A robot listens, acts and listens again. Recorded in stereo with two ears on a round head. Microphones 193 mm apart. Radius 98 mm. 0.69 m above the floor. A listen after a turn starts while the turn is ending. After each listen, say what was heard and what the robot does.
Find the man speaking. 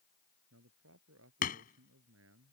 Turn 90° right.
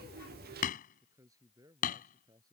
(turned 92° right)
So it is at 20° right. Turn 20° right.
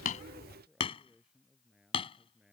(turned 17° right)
Facing the man speaking.